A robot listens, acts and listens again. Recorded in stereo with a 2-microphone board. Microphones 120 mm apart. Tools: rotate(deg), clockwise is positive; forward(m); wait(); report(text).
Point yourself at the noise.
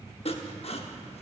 rotate(-55)
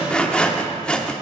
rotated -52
rotate(-10)
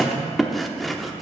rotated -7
report("Found it: sawing, straight ahead.")